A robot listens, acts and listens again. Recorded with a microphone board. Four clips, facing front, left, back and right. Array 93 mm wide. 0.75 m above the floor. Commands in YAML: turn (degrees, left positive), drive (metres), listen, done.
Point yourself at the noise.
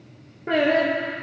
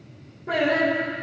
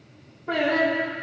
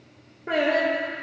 turn: -25
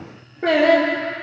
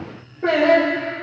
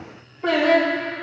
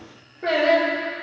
turn: 10
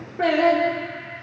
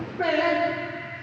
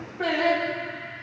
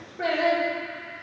turn: 10
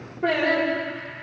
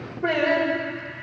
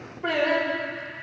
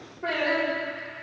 turn: 15
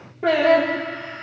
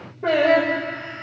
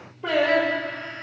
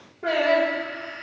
done: "Found it: singing, straight ahead."